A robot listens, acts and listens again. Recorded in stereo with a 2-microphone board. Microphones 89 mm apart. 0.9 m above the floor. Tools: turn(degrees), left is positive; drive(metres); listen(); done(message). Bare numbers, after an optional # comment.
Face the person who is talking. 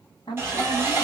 # The woman speaking: about 55° left or 125° left.
turn(55)
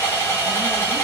listen()
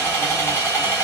listen()
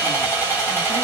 done("I heard a woman speaking, but can't make it out now. It was about straight ahead or 70° left.")